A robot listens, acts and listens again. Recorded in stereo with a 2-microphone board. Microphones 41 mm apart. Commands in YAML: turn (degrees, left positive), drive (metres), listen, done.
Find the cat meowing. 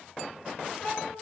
turn: 50
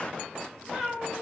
turn: 10
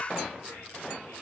listen: true
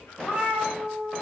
done: "Found it: a cat meowing, straight ahead, 1 to 2 m away."